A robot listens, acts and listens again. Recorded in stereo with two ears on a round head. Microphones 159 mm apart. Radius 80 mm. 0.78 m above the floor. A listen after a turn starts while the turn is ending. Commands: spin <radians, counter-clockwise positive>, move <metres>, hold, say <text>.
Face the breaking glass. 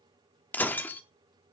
spin 0.52
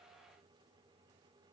hold
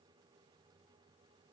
say I heard breaking glass, but can't make it out now. It was about 20° right or 140° left.